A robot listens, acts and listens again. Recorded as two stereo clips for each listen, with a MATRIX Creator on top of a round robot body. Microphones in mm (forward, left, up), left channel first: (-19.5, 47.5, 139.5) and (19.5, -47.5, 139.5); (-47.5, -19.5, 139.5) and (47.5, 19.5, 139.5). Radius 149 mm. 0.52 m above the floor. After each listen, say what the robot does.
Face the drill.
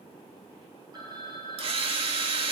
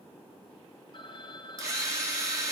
Turn 35° right.
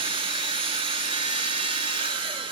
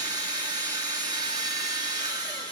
Turn 30° right.
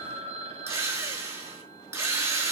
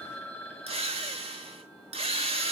Facing the drill.